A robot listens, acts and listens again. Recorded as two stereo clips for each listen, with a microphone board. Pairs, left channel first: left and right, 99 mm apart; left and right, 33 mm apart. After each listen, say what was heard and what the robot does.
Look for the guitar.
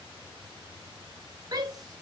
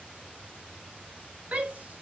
Keep listening.
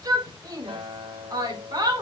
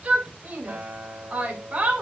The guitar: about 75° right or 105° right. Turn 75° right.
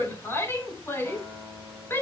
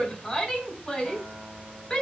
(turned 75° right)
Found it: a guitar, straight ahead, over 4 m away.